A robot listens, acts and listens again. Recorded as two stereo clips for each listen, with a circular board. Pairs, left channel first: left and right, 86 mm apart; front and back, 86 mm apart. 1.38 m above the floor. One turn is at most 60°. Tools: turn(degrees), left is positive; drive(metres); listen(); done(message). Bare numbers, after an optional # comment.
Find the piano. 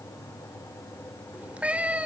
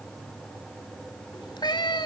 listen()
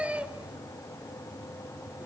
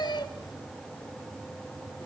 listen()
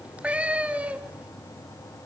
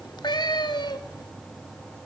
done("I can't make out a piano, only a cat meowing.")